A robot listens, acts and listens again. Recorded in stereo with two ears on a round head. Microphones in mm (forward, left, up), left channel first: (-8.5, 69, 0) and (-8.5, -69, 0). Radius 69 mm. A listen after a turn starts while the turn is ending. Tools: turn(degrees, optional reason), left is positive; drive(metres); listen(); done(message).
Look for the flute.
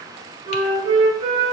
turn(degrees=-35, reason="The flute: about 35° right or 145° right.")
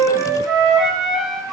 done("Found it: a flute, straight ahead.")